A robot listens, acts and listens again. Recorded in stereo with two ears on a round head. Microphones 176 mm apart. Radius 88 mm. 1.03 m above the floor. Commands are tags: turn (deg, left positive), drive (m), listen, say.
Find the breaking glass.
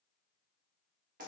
<listen/>
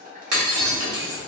<turn deg="-90"/>
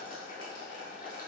<say>I heard breaking glass from this way, but can't make it out now.</say>